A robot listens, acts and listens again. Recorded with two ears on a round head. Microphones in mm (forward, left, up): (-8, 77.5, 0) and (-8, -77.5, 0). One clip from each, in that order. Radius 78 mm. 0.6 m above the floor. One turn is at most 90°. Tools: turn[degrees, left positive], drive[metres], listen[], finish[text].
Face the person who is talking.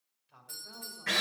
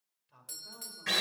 Action: turn[-30]
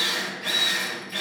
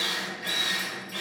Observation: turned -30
Action: listen[]
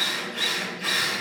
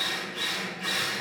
Action: listen[]
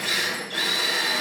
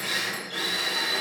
Action: finish[I heard a man speaking, but can't make it out now. It was about 25° left or 145° right.]